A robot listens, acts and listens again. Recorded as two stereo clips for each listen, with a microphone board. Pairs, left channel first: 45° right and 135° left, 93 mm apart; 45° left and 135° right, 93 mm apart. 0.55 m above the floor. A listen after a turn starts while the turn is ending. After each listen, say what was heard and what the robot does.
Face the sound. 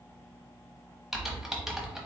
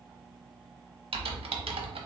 The typing on a keyboard: 140° right. Turn 140° right.
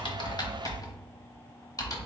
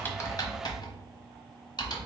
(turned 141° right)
Found it: typing on a keyboard, straight ahead, under 1 m away.